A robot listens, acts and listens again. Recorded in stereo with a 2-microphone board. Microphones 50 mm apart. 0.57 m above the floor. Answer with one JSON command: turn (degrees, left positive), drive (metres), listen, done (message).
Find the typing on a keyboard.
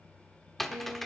{"turn": 30}
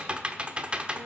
{"turn": -25}
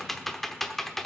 {"done": "Found it: typing on a keyboard, straight ahead."}